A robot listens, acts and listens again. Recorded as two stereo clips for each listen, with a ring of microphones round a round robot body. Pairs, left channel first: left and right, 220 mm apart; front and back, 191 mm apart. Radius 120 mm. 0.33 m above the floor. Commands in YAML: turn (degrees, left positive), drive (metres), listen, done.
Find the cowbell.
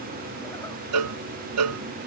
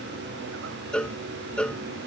turn: -85
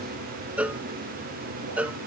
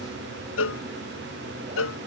done: "Facing the cowbell."